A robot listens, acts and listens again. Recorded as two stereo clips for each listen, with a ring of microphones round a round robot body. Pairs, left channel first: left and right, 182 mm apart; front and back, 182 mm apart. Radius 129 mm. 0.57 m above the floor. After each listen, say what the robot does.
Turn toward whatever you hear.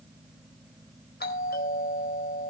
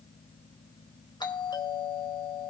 Turn 65° left.
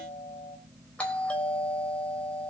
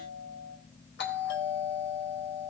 Facing the doorbell, over 4 m away.